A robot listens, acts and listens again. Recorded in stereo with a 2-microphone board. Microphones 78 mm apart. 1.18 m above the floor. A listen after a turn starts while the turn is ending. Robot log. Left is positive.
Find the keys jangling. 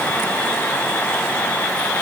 cmd idle
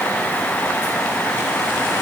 cmd idle
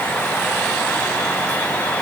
end: I can't make out keys jangling.